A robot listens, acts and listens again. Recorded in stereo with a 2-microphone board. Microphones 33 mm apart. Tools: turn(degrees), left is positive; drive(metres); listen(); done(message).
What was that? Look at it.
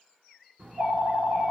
turn(degrees=-50)
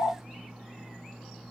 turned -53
turn(degrees=-65)
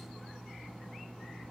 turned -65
done("Found it: a phone ringing, straight ahead.")